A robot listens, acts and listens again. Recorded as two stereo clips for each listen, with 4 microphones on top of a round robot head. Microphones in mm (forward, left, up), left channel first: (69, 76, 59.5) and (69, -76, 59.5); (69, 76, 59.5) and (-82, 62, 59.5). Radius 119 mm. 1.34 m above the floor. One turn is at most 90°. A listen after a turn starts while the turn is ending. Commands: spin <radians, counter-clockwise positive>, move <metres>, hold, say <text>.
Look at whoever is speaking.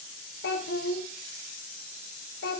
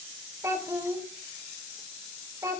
spin 1.57
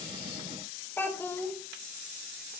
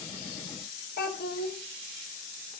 spin 0.26
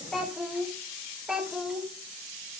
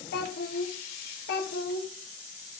say Facing the child speaking.